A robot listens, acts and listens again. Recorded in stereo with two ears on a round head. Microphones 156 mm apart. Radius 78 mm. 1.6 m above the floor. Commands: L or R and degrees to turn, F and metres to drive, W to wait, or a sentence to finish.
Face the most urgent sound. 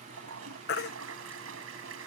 L60
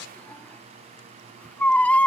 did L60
L10
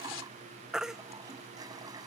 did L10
Facing the baby crying.